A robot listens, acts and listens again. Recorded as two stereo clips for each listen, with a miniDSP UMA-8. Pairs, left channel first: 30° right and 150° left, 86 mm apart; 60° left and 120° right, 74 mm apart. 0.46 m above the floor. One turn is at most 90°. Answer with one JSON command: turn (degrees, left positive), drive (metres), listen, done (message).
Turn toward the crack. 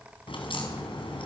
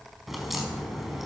{"turn": -35}
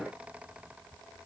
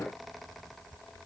{"done": "I heard a crack from this way, but can't make it out now."}